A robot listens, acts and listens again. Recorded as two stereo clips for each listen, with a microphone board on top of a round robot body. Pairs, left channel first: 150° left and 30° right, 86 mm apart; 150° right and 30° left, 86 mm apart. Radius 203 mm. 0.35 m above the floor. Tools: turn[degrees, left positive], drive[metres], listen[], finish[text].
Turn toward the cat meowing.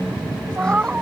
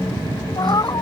Thought: The cat meowing: 105° right.
Action: turn[-105]
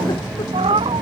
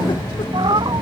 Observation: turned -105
Thought: The cat meowing is now 10° right.
Action: turn[-10]
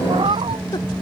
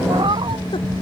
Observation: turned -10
Action: finish[Found it: a cat meowing, straight ahead.]